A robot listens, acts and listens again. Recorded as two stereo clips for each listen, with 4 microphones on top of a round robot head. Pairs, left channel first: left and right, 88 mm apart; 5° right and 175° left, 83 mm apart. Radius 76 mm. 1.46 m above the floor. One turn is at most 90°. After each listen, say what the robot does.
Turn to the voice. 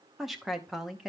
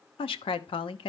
Found it: a woman speaking, straight ahead.